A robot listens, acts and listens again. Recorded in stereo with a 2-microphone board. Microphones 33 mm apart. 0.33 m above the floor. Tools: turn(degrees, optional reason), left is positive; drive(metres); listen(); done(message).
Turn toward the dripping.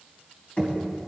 listen()
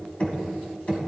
listen()
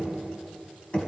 done("I can't make out dripping, only knocking.")